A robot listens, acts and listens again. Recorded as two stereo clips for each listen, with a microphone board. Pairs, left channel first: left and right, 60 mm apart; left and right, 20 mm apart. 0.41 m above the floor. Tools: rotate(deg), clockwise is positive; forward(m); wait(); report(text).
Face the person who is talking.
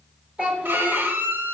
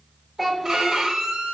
rotate(15)
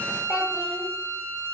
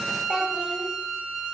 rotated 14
report("Facing the child speaking.")